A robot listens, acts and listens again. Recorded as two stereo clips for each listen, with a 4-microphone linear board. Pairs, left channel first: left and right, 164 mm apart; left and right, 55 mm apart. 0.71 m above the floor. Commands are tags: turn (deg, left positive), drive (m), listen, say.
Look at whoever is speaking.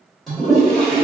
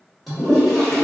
<listen/>
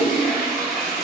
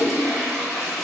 <listen/>
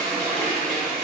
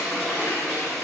<say>I can't make out anyone speaking to turn to.</say>